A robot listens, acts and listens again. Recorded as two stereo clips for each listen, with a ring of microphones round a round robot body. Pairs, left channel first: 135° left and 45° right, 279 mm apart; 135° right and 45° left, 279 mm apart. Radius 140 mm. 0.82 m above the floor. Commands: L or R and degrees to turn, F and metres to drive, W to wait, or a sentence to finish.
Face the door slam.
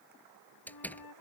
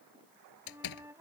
R140
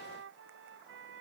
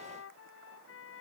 Facing where the door slam came from. I can't hear it now.